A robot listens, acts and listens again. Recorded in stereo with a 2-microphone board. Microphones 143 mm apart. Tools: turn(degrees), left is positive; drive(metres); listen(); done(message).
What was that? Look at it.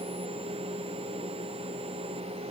listen()
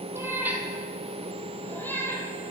turn(degrees=20)
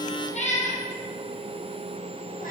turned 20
turn(degrees=110)
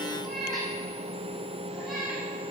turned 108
done("Found it: a cat meowing, straight ahead.")